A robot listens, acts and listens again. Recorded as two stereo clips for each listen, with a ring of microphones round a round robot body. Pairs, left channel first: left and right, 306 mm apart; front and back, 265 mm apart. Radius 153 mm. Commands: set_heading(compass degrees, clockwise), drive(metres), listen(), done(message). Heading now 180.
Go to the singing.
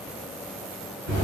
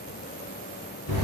listen()
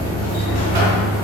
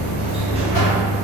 listen()
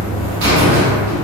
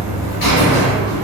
done("I can't make out singing to turn to.")